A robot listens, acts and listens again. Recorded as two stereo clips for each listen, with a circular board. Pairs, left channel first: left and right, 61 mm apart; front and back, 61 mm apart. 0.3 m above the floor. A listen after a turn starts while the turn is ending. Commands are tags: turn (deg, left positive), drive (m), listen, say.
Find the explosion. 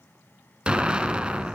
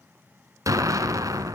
<turn deg="-160"/>
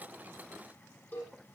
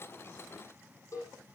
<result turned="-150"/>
<turn deg="-10"/>
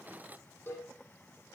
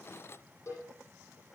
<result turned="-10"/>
<say>Facing where the explosion came from. I can't hear it now.</say>